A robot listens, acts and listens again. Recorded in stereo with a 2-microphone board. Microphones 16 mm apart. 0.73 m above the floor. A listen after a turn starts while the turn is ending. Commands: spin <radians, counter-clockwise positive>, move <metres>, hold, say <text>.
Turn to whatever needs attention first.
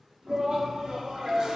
spin -0.79
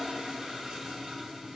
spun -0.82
hold
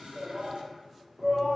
say Found it: a shout, straight ahead, 1 to 2 m away.